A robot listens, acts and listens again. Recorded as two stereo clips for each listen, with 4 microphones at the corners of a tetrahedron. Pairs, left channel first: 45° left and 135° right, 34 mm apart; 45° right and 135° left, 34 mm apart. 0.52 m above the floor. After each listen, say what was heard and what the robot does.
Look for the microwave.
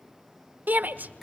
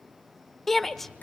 The microwave: 90° left. Turn 90° left.
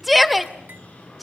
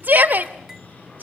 Found it: a microwave, straight ahead.